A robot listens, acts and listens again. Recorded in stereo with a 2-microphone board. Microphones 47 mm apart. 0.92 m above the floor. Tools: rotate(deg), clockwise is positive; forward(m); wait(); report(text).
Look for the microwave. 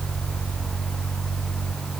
wait()
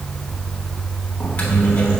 rotate(-25)
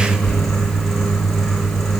report("Found it: a microwave, straight ahead.")